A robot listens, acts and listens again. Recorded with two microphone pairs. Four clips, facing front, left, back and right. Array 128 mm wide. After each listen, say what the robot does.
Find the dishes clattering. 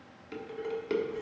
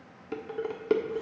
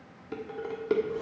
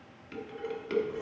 Turn 110° left.
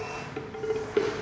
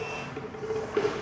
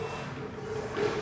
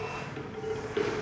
Turn 25° left.
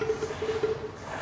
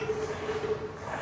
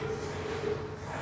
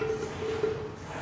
Turn 25° right.
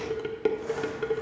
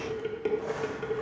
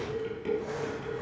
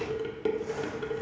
Facing the dishes clattering, 1 to 2 m away.